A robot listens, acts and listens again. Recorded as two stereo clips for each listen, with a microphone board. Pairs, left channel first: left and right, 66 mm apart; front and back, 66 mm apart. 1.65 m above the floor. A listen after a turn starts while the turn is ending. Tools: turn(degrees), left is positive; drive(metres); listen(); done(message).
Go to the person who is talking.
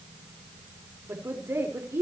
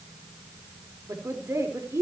turn(degrees=-140)
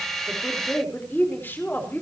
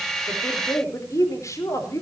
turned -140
turn(degrees=35)
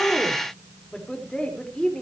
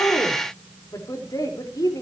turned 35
turn(degrees=15)
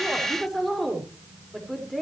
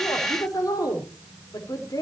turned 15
drive(metres=1.0)
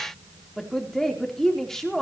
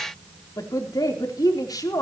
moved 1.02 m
drive(metres=1.0)
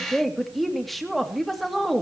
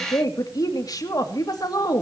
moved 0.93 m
drive(metres=1.0)
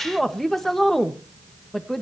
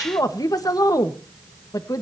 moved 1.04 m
drive(metres=1.0)
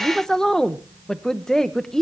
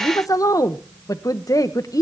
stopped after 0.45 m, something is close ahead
turn(degrees=10)
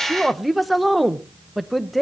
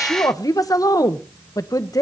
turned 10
done("Arrived at the woman speaking, straight ahead.")